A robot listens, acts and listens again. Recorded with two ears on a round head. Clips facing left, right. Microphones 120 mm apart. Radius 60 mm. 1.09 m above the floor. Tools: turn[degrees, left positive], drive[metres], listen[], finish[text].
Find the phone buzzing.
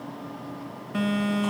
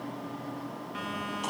Thought: The phone buzzing: about 60° left or 120° left.
Action: turn[60]
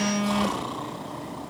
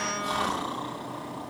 Thought: So it is at 45° left.
Action: turn[45]
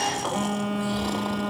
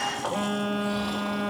Action: finish[Found it: a phone buzzing, straight ahead.]